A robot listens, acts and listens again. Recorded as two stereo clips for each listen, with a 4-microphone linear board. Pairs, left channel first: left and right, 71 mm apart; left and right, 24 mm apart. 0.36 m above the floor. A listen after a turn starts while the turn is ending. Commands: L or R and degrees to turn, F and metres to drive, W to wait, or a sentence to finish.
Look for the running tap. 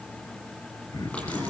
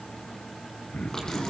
L20
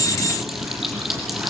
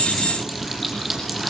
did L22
Facing the running tap, over 4 m away.